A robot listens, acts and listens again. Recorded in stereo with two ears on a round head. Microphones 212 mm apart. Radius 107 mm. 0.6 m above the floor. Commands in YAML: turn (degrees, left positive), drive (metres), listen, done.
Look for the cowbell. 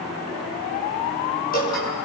listen: true
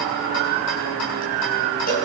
turn: 35
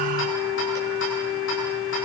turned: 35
listen: true
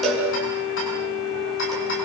done: "Found it: a cowbell, straight ahead."